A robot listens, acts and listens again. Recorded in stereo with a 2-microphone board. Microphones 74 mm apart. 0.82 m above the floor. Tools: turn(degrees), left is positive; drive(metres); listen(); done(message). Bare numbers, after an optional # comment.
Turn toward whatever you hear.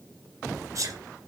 # The sneeze: about 45° right or 135° right.
turn(-45)
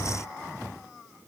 listen()
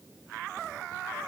done("I heard a sneeze, but can't make it out now. It was about straight ahead or 90° right.")